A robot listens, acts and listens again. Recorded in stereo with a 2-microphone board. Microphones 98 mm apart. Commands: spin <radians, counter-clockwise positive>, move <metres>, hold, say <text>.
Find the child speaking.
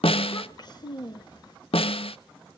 spin 0.79
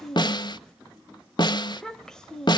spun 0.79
say Found it: a child speaking, straight ahead, under 1 m away.